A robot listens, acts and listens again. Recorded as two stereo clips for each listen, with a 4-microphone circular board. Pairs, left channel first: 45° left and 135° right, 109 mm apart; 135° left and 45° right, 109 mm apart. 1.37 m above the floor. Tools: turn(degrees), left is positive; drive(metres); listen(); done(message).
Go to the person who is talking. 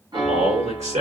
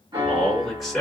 turn(degrees=-135)
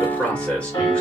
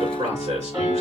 turn(degrees=-35)
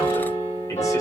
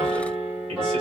listen()
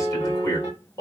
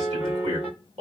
turn(degrees=-15)
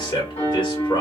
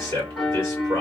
drive(metres=1.0)
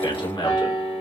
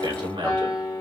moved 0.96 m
drive(metres=1.0)
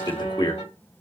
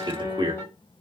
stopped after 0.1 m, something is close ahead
done("I am next to the man speaking.")